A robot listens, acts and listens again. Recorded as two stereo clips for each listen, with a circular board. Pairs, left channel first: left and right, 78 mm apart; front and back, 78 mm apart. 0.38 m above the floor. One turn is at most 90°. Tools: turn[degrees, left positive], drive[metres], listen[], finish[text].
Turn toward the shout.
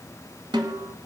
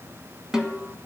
Action: listen[]
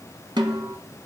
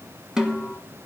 Action: listen[]
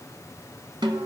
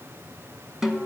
Action: finish[I can't make out a shout, only a snare drum.]